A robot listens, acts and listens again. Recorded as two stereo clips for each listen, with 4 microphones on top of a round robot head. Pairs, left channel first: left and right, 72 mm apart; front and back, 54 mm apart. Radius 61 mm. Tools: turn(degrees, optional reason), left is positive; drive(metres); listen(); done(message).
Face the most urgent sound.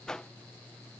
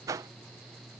listen()
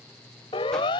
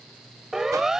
turn(degrees=100, reason="The siren: 100° left.")
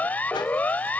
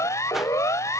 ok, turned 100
turn(degrees=20, reason="The siren is now 20° left.")
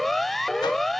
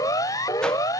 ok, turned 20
done("Found it: a siren, straight ahead.")